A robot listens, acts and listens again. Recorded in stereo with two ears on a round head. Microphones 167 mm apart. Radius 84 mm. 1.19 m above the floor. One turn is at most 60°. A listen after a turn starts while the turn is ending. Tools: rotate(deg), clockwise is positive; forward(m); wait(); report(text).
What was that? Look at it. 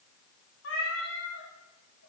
rotate(-60)
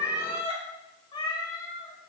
rotate(-20)
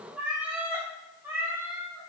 rotate(15)
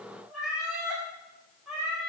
report("Found it: a cat meowing, straight ahead.")